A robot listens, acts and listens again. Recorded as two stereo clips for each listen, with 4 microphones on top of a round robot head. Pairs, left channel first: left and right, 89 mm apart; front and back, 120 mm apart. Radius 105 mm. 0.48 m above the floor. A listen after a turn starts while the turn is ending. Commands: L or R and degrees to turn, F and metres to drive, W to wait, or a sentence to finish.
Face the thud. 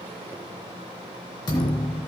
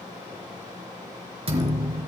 L140
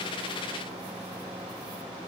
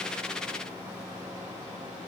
I heard a thud from this way, but can't make it out now.